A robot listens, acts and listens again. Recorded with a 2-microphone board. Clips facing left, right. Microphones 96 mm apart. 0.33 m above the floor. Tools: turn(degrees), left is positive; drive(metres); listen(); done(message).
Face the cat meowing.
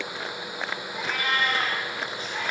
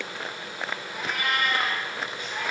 turn(degrees=-55)
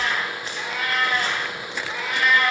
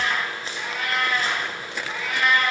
turn(degrees=10)
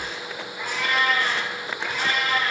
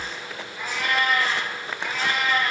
turn(degrees=10)
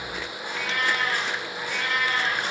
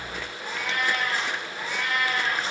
done("Facing the cat meowing, over 4 m away.")